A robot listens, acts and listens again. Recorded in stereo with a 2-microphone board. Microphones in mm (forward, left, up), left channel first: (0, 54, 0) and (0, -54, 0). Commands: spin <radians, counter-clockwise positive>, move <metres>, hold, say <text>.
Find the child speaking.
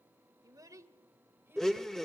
spin -0.35
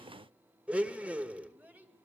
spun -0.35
spin -0.52
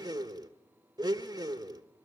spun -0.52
hold
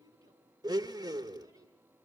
spin -2.53
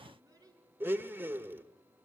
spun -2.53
spin -0.61
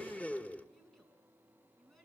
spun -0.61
say Facing the child speaking, over 4 m away.